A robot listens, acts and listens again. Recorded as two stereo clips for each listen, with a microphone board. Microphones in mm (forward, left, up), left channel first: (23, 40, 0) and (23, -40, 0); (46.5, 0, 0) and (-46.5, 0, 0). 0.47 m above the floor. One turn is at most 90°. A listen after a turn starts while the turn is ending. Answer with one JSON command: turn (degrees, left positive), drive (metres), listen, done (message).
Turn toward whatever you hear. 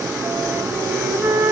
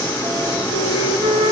{"turn": -90}
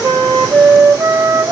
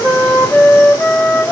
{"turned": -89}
{"turn": -85}
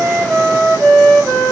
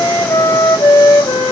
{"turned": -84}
{"done": "Found it: a flute, straight ahead."}